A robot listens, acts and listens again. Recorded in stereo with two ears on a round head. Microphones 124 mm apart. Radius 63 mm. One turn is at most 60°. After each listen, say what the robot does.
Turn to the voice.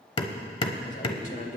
Turn 60° left.
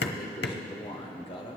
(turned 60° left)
Turn 45° left.
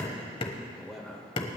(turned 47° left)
Facing the man speaking, 1 to 2 m away.